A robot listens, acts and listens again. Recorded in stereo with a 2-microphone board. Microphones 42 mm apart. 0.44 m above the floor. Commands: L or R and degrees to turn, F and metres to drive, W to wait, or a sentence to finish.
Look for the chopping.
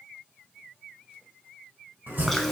R55
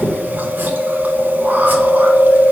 W
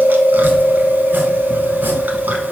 W
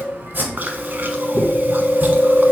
R60
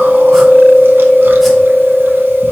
W
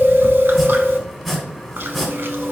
Found it: chopping, straight ahead.